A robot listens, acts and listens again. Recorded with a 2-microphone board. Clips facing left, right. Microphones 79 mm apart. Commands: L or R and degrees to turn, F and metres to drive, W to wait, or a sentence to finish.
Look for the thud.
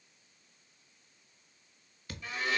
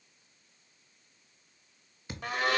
R25
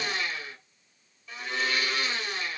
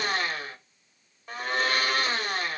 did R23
W
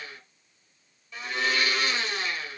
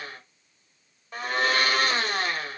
I heard a thud, but can't make it out now. It was about straight ahead or 135° right.